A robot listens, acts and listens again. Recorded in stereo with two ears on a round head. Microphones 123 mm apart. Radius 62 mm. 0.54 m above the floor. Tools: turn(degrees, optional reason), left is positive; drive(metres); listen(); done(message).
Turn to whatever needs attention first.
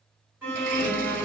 turn(degrees=-20, reason="The alarm: about 20° right or 160° right.")
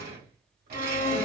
turn(degrees=-140, reason="So it is at 140° right.")
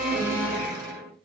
turn(degrees=10, reason="The alarm is now 10° left.")
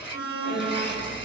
done("Found it: an alarm, straight ahead, 1 to 2 m away.")